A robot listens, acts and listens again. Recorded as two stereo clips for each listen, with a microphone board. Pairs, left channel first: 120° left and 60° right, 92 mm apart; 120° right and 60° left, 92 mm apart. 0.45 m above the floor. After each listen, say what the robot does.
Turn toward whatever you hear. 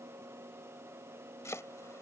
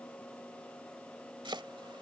Turn 70° left.
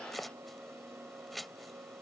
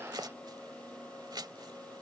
Turn 30° left.
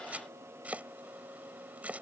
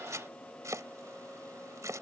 Turn 10° left.
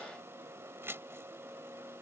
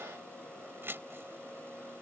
Found it: chopping, straight ahead.